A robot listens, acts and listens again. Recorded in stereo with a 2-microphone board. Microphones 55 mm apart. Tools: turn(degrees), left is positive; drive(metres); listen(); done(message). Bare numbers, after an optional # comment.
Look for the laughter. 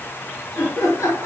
# The laughter: about 60° left or 120° left.
turn(60)
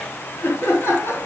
# So it is at 50° left.
turn(50)
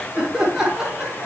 # The laughter is now 10° right.
turn(-10)
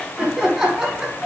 done("Facing the laughter.")